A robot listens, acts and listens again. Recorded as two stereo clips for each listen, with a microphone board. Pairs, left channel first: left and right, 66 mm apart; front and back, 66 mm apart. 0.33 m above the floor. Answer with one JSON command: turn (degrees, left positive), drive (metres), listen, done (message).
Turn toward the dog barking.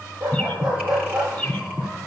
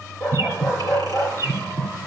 {"turn": -80}
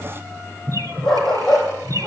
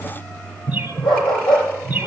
{"turn": 10}
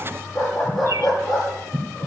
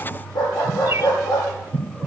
{"done": "Found it: a dog barking, straight ahead."}